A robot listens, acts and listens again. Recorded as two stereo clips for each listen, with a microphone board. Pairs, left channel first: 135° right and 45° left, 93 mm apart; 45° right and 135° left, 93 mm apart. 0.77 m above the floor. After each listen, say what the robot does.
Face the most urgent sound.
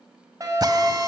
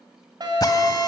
Turn 95° left.
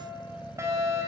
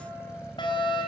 Turn 10° right.
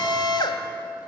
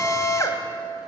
Found it: a fire alarm, straight ahead.